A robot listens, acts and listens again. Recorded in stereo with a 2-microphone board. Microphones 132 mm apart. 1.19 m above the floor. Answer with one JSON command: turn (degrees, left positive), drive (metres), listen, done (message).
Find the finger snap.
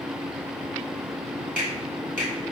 {"turn": 75}
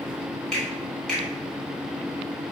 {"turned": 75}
{"done": "Facing the finger snap."}